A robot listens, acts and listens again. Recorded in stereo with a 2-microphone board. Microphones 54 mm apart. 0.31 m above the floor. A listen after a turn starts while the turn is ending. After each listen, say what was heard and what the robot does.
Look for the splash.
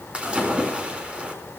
The splash: about 20° right or 160° right. Turn 20° right.
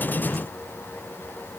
Keep listening.
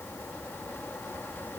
I heard a splash, but can't make it out now. It was about straight ahead or 140° right.